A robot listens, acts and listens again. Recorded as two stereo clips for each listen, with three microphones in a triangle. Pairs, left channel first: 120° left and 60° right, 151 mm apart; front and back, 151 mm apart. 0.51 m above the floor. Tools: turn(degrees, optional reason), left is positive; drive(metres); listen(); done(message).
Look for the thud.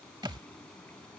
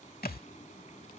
done("Facing the thud.")